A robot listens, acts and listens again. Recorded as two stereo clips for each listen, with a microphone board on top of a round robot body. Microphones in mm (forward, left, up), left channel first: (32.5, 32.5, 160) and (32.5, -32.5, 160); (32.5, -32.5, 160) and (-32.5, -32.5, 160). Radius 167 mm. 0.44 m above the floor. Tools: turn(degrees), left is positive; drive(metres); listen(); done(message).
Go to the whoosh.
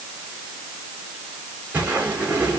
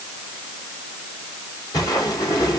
turn(degrees=-25)
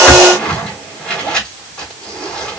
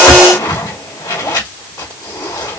turn(degrees=15)
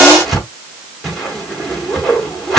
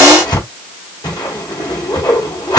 drive(metres=1.0)
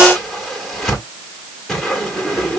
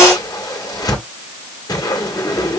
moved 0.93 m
drive(metres=1.0)
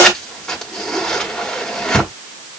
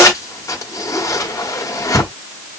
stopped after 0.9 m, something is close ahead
turn(degrees=15)
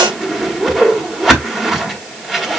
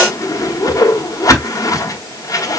done("Arrived at the whoosh, straight ahead.")